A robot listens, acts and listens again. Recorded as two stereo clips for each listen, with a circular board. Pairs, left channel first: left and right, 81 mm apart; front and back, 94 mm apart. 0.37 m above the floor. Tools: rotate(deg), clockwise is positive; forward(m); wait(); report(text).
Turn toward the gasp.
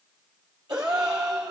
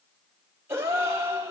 rotate(120)
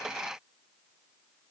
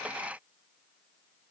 report("I heard a gasp from this way, but can't make it out now.")